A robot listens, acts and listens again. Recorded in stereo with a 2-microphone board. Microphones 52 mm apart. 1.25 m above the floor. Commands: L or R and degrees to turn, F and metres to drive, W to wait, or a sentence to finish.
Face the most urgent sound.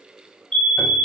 L20
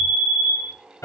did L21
L135
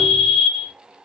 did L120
L15
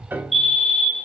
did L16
Found it: a fire alarm, straight ahead, 2 to 4 m away.